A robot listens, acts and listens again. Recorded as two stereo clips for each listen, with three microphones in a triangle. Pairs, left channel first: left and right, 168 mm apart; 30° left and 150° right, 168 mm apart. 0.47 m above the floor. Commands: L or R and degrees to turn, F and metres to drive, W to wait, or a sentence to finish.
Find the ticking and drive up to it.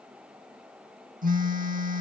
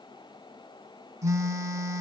W
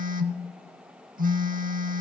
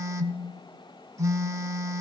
W
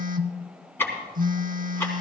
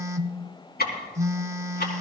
L15
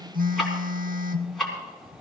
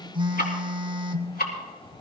F1.0
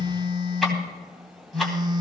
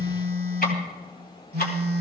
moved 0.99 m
F1.0
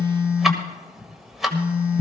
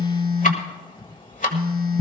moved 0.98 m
F1.0
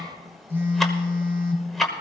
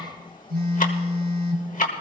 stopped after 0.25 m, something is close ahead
Arrived at the ticking, straight ahead.